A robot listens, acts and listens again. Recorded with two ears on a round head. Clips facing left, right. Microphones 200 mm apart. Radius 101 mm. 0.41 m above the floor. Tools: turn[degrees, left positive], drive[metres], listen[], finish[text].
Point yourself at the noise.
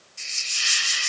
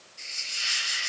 Thought: The hiss: about 60° left or 120° left.
Action: turn[60]
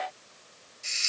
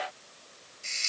Thought: So it is at 15° left.
Action: turn[15]
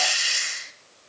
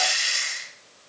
Action: finish[Found it: a hiss, straight ahead, 1 to 2 m away.]